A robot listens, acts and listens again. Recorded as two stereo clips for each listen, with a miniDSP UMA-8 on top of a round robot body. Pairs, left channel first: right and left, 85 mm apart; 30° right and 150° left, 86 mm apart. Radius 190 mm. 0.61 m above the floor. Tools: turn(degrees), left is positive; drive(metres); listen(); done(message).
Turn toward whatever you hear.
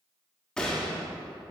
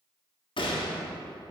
turn(degrees=-10)
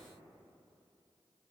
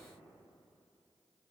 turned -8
done("Facing where the gunshot came from. I can't hear it now.")